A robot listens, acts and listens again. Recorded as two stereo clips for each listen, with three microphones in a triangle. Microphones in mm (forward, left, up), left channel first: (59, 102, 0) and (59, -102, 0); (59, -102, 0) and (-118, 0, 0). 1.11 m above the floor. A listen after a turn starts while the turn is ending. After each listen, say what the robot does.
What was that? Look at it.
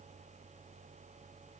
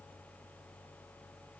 Keep listening.
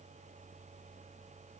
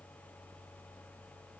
Keep listening.
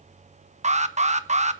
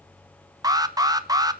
Turn 140° right.
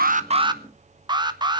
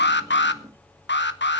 Turn 25° right.
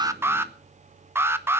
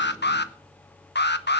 Turn 15° right.
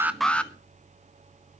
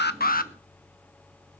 Facing the alarm, 1 to 2 m away.